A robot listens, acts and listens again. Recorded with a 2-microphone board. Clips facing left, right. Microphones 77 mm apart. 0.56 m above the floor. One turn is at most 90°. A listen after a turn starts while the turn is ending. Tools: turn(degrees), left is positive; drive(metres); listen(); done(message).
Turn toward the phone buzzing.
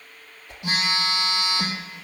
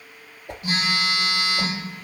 turn(degrees=90)
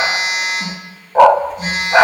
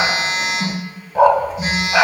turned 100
done("Facing the phone buzzing, over 4 m away.")